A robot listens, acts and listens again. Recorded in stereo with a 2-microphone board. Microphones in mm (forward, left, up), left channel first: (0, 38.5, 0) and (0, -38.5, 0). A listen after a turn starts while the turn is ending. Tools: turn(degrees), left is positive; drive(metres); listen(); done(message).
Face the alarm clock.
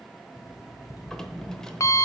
turn(degrees=45)
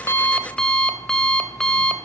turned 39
turn(degrees=10)
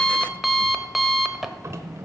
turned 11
done("Facing the alarm clock, under 1 m away.")